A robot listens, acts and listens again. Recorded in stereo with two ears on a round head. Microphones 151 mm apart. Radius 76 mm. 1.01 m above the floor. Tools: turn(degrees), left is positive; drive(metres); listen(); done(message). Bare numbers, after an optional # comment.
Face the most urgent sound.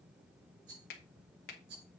listen()
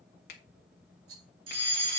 # The fire alarm: about 35° right or 145° right.
turn(-35)
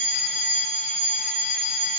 done("Found it: a fire alarm, straight ahead, over 4 m away.")